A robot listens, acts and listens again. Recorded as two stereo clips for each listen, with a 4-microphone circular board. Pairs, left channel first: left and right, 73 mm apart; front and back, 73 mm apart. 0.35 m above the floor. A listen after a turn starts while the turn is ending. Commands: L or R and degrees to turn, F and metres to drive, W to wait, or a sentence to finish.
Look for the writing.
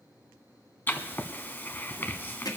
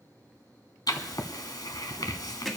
L30
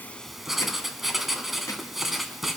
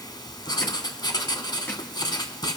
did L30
Facing the writing, 1 to 2 m away.